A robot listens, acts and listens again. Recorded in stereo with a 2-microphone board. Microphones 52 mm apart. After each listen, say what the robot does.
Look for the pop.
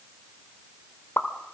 Turn 50° left.
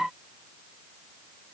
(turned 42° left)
Keep listening.
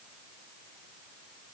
I heard a pop, but can't make it out now. It was about 10° left or 85° left.